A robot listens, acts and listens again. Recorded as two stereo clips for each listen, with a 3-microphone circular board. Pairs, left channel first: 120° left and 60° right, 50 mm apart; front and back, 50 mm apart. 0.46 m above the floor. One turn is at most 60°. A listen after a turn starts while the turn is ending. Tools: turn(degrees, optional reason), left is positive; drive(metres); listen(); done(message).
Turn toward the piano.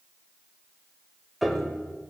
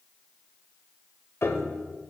turn(degrees=30, reason="The piano: 30° left.")
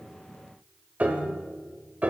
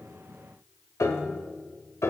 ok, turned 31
done("Found it: a piano, straight ahead, under 1 m away.")